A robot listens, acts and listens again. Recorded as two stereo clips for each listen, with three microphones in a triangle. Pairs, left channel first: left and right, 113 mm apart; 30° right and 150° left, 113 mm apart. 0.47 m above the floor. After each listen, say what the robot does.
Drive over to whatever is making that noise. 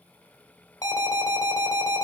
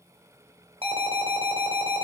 Turn 140° left.
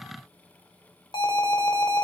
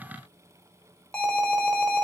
Turn 50° left.
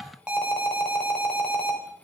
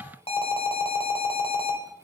Turn 10° right.
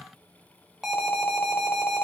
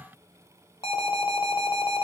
Drive 1.0 m forward.
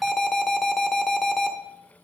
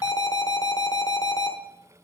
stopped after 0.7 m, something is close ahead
Arrived at the alarm, straight ahead.